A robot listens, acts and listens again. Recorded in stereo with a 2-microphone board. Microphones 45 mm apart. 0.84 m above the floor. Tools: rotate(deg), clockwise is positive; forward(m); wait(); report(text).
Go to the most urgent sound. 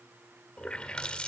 wait()
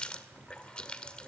wait()
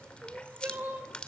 rotate(40)
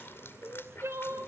rotate(100)
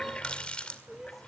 forward(1.0)
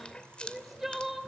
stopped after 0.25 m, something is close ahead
report("Something is in my way. I am facing the crying but have not reached it.")